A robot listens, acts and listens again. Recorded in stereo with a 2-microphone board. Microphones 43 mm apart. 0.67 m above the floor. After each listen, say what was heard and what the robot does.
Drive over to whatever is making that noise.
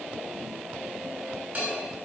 The bell: about 30° right or 150° right. Turn 30° right.
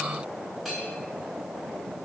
Drive 1.0 m forward.
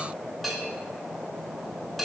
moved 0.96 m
Drive 1.0 m forward.
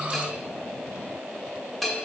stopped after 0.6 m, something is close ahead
Arrived at the bell, straight ahead.